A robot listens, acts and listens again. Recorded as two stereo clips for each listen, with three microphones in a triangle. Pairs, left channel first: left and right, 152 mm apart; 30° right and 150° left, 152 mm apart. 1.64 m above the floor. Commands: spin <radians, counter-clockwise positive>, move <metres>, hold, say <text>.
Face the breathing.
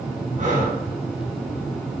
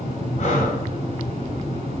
spin -1.22
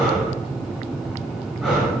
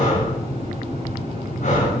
say Found it: breathing, straight ahead, 2 to 4 m away.